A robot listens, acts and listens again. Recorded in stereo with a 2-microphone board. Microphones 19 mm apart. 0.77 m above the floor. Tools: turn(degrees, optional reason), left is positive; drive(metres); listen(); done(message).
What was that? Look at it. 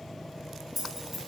turn(degrees=-30)
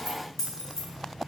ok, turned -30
turn(degrees=30, reason="So it is at 30° left.")
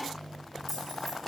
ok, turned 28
listen()
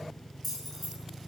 turn(degrees=10, reason="The keys jangling is now 10° left.")
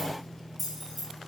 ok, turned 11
done("Facing the keys jangling.")